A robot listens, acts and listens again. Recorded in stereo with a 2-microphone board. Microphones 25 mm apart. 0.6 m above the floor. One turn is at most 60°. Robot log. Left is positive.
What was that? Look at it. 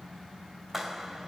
note: The clap: about 15° right or 165° right.
cmd yaw -15
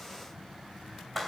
end: Found it: a clap, straight ahead.